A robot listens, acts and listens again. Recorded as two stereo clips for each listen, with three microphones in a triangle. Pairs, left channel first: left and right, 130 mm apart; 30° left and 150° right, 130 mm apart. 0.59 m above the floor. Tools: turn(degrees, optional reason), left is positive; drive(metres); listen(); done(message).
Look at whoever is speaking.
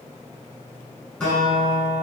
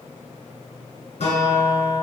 listen()
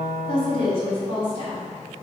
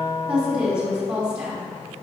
turn(degrees=130, reason="The woman speaking: 130° left.")
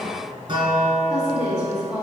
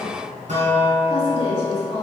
turn(degrees=-10, reason="The woman speaking is now 10° right.")
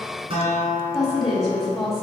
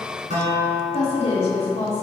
done("Found it: a woman speaking, straight ahead, 1 to 2 m away.")